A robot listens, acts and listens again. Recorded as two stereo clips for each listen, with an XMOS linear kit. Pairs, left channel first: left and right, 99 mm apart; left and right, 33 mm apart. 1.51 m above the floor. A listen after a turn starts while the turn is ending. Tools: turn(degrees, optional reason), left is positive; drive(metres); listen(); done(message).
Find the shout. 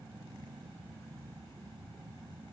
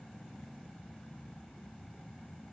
listen()
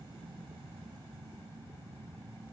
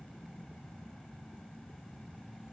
listen()
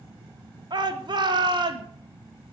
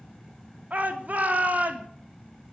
turn(degrees=-50, reason="The shout: about 50° right or 130° right.")
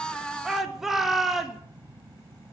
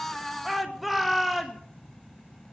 done("Found it: a shout, straight ahead.")